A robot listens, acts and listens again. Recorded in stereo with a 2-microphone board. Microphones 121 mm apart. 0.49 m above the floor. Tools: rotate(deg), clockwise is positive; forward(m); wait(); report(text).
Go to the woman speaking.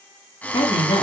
rotate(-60)
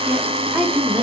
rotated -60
forward(1.0)
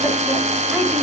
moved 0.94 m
wait()
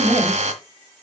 forward(1.0)
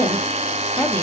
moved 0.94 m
rotate(-10)
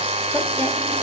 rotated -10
wait()
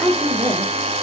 forward(1.0)
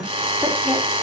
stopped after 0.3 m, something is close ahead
report("Arrived at the woman speaking, straight ahead.")